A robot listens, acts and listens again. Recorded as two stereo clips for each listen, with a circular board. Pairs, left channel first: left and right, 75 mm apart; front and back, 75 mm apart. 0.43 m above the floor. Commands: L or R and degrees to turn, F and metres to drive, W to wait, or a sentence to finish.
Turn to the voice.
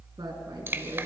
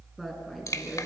R90
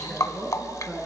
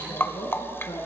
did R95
Facing the woman speaking.